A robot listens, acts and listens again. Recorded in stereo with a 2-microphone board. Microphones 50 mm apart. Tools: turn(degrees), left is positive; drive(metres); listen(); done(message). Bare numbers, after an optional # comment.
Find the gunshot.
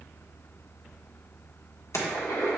turn(90)
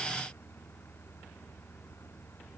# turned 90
done("Facing where the gunshot came from. I can't hear it now.")